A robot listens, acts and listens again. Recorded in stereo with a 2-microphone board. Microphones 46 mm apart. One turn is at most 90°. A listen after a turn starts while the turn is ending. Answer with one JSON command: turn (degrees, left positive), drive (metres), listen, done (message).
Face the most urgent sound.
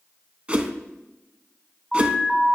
{"turn": 30}
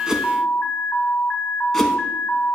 {"turn": 90}
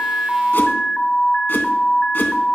{"turn": 10}
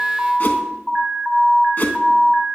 {"done": "Found it: an alarm, straight ahead."}